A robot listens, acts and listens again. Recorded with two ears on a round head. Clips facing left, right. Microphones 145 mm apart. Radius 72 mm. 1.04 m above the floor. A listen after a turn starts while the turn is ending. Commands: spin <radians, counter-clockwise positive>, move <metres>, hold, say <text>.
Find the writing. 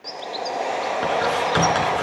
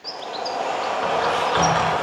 spin 0.87
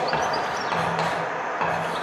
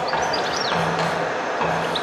say Found it: writing, straight ahead, over 4 m away.